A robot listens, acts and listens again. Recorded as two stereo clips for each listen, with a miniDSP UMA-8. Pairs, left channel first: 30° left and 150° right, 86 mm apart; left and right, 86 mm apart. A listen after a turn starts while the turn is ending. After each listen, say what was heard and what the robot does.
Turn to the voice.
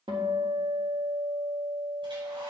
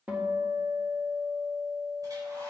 Keep listening.
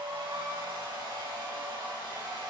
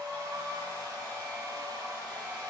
Keep listening.
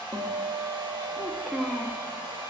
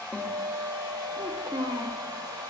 The child speaking: 55° right. Turn 55° right.
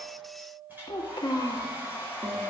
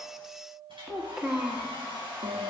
Facing the child speaking.